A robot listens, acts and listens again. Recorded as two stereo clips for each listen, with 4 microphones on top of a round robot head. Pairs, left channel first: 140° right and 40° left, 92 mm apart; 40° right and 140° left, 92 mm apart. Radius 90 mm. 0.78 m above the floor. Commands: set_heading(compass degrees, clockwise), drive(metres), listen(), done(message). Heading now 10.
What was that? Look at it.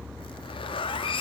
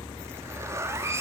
set_heading(170)
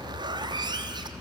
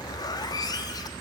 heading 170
done("Facing the zipper, 1 to 2 m away.")